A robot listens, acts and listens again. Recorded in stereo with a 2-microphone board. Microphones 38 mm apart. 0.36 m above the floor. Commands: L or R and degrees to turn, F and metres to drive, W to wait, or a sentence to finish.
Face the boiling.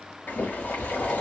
L55
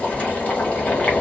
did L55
L50
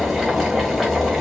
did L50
Facing the boiling, 1 to 2 m away.